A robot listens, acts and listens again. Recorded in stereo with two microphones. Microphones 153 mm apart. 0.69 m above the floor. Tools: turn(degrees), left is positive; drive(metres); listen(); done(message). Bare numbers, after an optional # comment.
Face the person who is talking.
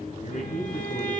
# The man speaking: about 55° left or 125° left.
turn(55)
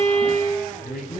# So it is at 80° left.
turn(80)
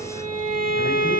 listen()
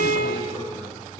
listen()
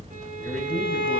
done("Facing where the man speaking came from. I can't hear it now.")